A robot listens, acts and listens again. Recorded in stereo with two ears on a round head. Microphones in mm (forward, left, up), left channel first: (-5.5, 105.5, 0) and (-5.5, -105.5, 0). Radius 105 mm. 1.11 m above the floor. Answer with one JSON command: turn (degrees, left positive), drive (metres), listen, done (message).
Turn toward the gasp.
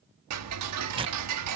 {"listen": true}
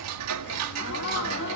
{"turn": 55}
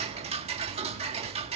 {"listen": true}
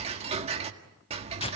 {"done": "I heard a gasp, but can't make it out now. It was about straight ahead or 70° left."}